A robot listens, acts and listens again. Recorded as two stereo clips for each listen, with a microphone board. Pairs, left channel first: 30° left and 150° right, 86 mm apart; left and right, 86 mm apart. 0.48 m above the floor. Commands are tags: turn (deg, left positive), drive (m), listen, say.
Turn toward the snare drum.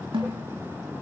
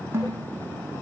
<turn deg="-150"/>
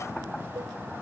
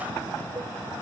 <listen/>
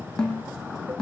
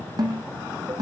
<turn deg="-50"/>
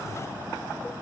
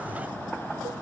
<listen/>
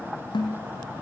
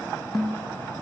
<say>Found it: a snare drum, straight ahead.</say>